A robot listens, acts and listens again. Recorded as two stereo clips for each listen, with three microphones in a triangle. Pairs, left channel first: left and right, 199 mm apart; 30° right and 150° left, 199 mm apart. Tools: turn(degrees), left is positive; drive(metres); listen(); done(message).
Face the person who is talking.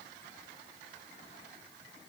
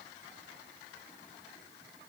listen()
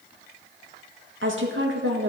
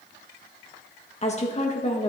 turn(degrees=-85)
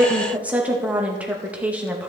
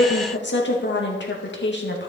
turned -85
turn(degrees=-10)
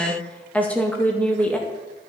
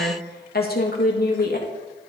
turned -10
done("Found it: a woman speaking, straight ahead.")